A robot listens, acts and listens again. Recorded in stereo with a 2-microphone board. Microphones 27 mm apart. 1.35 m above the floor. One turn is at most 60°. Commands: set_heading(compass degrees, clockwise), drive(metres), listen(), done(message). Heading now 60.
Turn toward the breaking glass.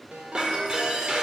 set_heading(90)
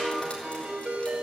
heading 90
listen()
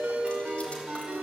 done("I heard breaking glass, but can't make it out now. It was about straight ahead or 120° right.")